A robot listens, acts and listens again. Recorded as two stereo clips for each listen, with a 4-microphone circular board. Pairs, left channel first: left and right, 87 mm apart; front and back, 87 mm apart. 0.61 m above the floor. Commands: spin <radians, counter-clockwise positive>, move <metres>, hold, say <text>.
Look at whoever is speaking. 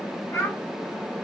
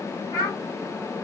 spin 0.52
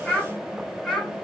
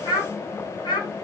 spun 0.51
say Found it: a child speaking, straight ahead, 1 to 2 m away.